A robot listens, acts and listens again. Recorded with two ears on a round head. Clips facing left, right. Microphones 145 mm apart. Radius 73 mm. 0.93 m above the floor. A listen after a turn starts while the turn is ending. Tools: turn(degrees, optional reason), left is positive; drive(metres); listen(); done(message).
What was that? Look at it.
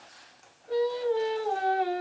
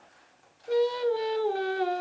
turn(degrees=-90)
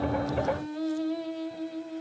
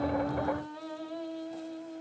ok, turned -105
turn(degrees=20, reason="So it is at 20° left.")
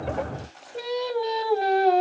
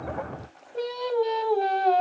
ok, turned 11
done("Found it: singing, straight ahead, 1 to 2 m away.")